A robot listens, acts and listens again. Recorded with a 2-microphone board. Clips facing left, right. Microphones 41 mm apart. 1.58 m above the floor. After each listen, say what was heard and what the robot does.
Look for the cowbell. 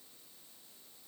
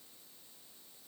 Keep listening.
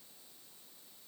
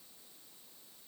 Keep listening.
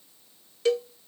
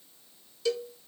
The cowbell: about 40° left or 140° left. Turn 40° left.
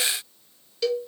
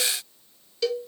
Found it: a cowbell, straight ahead, under 1 m away.